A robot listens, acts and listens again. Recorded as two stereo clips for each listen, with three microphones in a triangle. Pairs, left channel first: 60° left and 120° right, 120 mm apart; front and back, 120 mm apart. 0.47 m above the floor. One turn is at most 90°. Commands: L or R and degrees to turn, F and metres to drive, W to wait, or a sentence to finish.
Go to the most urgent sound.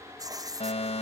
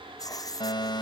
L45
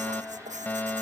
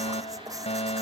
R15
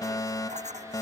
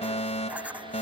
F1.0
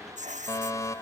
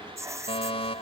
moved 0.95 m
F1.0
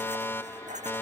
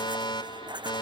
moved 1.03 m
F1.0
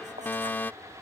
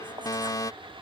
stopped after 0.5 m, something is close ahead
Arrived at the fire alarm, straight ahead.